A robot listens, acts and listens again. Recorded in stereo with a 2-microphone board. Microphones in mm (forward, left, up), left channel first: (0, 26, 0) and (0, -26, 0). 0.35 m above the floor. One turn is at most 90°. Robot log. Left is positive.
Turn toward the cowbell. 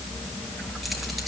cmd idle
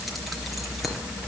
cmd idle
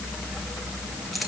end: I can't make out a cowbell to turn to.